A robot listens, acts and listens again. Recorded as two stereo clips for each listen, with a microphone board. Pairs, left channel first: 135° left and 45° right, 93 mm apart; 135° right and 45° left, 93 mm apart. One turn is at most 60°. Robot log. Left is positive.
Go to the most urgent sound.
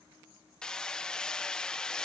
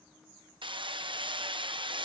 cmd idle
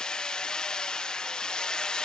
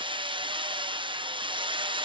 cmd idle
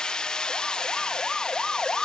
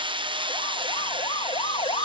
note: The siren: 145° right.
cmd yaw -60
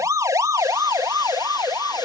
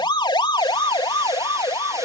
note: The siren is now 100° right.
cmd yaw -60
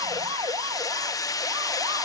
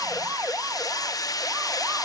note: The siren is now 20° right.
cmd yaw -20
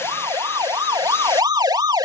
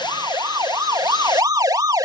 cmd fwd 1.0
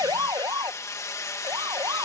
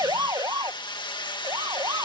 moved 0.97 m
cmd fwd 1.0
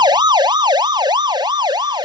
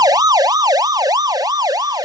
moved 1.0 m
cmd fwd 1.0
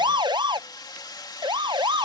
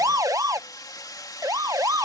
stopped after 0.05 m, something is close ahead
note: The siren is now 10° right.
cmd yaw -10
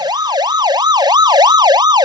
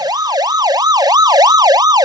end: Arrived at the siren, straight ahead.